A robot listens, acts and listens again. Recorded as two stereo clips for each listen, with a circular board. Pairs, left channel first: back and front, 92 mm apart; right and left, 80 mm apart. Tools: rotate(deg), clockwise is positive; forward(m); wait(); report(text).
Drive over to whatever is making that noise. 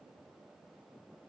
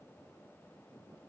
wait()
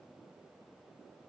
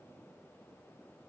wait()
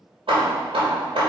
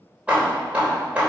rotate(-20)
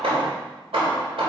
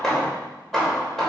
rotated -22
forward(1.0)
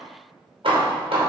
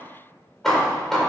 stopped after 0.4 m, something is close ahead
report("Something is in my way. I am facing the hammering but have not reached it.")